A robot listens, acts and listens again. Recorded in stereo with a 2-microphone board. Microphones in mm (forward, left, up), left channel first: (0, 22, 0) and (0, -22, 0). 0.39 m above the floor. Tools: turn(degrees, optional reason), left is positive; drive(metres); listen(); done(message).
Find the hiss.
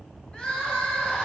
listen()
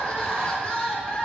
listen()
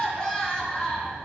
done("I can't make out a hiss, only crying.")